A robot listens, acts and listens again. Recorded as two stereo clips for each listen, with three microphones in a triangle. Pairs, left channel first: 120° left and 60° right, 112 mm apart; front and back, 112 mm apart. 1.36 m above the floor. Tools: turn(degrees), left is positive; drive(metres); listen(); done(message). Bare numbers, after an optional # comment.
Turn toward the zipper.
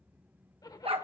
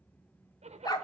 # The zipper: 175° left.
turn(175)
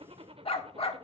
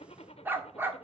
# The zipper is now 25° right.
turn(-25)
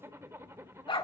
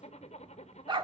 done("Found it: a zipper, straight ahead.")